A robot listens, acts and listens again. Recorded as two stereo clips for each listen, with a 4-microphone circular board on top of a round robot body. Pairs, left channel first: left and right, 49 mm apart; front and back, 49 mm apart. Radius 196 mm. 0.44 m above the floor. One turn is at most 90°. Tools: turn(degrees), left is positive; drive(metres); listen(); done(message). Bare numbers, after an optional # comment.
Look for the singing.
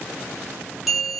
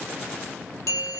listen()
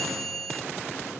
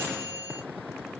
listen()
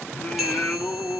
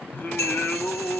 # The singing: 35° left.
turn(35)
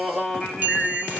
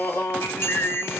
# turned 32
done("Found it: singing, straight ahead, 1 to 2 m away.")